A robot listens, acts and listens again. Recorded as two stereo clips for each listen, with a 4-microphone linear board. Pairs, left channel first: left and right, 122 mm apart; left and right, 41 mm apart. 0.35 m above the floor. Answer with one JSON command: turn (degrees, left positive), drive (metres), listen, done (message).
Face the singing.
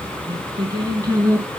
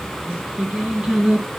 {"turn": -25}
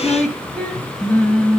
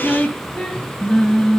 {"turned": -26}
{"turn": 15}
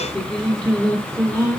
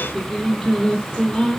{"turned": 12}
{"turn": 10}
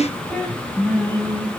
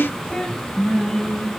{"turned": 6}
{"turn": 10}
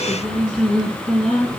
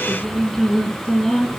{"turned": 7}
{"done": "Facing the singing, 2 to 4 m away."}